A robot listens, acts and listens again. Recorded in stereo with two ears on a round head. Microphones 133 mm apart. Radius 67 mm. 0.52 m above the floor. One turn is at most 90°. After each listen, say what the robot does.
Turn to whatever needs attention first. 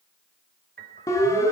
Turn 20° left.
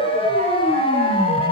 Turn 90° left.
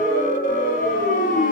Turn 60° left.
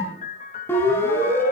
Turn 15° left.
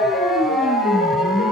Found it: a siren, straight ahead, over 4 m away.